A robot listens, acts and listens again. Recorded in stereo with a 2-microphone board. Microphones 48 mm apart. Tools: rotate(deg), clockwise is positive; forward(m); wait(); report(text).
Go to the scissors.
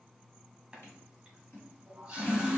rotate(-60)
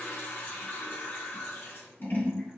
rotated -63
rotate(-50)
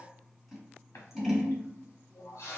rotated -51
forward(1.0)
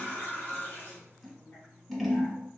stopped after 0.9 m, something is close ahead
report("Arrived at the scissors, straight ahead.")